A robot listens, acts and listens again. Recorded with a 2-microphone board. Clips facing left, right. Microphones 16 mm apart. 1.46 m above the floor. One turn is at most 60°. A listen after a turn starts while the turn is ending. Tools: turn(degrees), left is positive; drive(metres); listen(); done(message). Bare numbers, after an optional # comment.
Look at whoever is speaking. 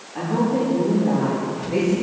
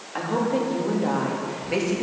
# The woman speaking: about 75° right or 105° right.
turn(-60)
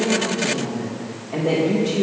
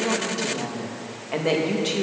# So it is at 50° right.
turn(-50)
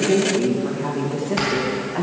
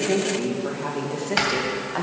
# The woman speaking is now 25° right.
turn(-25)
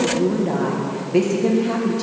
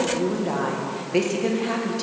# The woman speaking is now 15° right.
turn(-15)
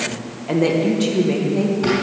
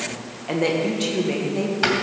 done("Facing the woman speaking.")